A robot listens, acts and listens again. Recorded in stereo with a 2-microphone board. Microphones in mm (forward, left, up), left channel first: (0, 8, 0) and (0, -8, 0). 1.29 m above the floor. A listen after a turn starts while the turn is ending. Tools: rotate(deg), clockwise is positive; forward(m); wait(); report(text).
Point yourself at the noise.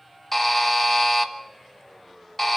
rotate(-30)
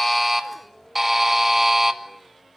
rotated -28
rotate(25)
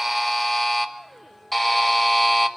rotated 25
report("Facing the buzzer, 1 to 2 m away.")